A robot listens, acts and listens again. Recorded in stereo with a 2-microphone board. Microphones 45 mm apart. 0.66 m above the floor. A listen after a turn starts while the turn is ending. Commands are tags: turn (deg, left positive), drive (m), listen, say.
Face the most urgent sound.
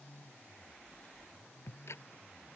<listen/>
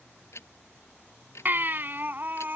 <turn deg="-45"/>
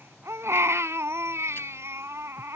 <turn deg="-85"/>
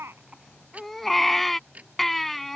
<say>Facing the baby crying.</say>